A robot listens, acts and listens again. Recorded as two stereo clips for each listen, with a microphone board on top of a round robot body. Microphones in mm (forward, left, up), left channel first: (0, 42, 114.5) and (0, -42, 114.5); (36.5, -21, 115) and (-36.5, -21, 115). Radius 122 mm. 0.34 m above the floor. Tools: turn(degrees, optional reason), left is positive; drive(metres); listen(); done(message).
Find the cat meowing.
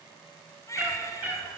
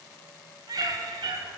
turn(degrees=-160, reason="The cat meowing: 160° right.")
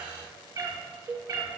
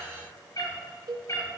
turn(degrees=-50, reason="The cat meowing is now 50° right.")
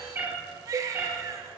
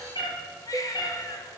turn(degrees=-20, reason="The cat meowing is now 20° right.")
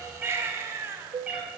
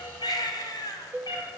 turn(degrees=-15, reason="The cat meowing is now 15° right.")
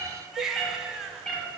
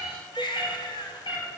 turn(degrees=10, reason="The cat meowing is now 10° left.")
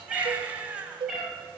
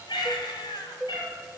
done("Found it: a cat meowing, straight ahead.")